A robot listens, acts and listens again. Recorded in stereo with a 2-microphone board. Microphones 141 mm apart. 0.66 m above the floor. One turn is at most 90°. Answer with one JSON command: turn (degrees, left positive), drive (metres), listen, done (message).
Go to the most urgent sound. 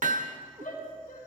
{"turn": 90}
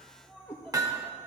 {"listen": true}
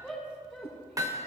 {"drive": 1.0}
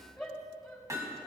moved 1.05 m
{"drive": 1.0}
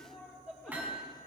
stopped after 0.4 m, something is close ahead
{"done": "Blocked. The shout is further on, straight ahead."}